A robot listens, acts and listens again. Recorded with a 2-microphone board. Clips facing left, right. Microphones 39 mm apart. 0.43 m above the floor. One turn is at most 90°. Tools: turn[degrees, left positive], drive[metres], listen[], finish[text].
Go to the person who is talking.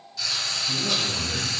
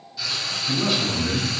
Thought: The man speaking: about 70° right or 110° right.
Action: turn[-70]
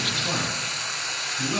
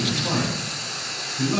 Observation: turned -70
Thought: So it is at 20° right.
Action: turn[-20]
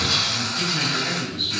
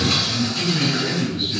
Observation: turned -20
Thought: The man speaking is now 10° right.
Action: turn[-10]
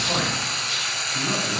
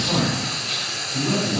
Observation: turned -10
Action: drive[1.0]
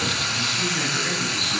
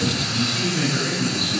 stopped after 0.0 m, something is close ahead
Action: finish[Something is in my way. I am facing the man speaking but have not reached it.]